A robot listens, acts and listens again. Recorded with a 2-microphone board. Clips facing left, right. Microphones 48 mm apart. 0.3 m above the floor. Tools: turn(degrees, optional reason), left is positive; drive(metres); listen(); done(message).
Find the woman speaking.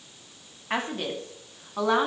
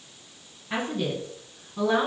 turn(degrees=60, reason="The woman speaking: about 60° left or 120° left.")
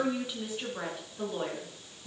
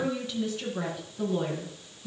turn(degrees=15, reason="So it is at 15° left.")
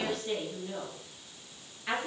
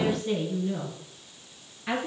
done("Facing the woman speaking, over 4 m away.")